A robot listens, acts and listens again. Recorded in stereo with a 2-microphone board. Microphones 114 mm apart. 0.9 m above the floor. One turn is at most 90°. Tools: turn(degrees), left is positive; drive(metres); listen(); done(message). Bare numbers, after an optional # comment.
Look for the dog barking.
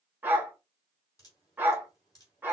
# The dog barking: about 15° right or 165° right.
turn(-15)
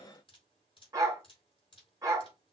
# So it is at 150° right.
turn(-90)
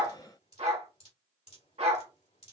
# The dog barking is now 100° right.
turn(-90)
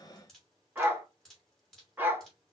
# The dog barking is now 20° right.
turn(-20)
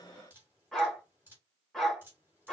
done("Found it: a dog barking, straight ahead, 1 to 2 m away.")